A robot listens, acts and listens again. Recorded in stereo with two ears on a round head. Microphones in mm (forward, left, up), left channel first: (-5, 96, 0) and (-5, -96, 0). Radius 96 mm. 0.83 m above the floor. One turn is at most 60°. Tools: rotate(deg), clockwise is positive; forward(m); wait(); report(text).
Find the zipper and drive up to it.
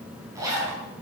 rotate(15)
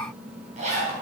rotate(60)
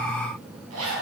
rotate(60)
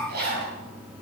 rotate(50)
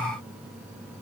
wait()
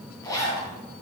rotate(-15)
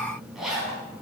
forward(1.0)
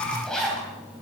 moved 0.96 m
forward(1.0)
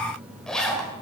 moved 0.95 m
forward(1.0)
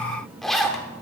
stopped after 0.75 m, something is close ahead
report("Arrived at the zipper, straight ahead.")